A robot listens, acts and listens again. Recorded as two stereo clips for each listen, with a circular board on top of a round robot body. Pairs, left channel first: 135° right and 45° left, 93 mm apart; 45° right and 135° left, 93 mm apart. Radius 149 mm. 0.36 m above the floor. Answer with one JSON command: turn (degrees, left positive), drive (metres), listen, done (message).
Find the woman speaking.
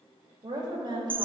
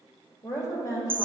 {"done": "Found it: a woman speaking, straight ahead, 2 to 4 m away."}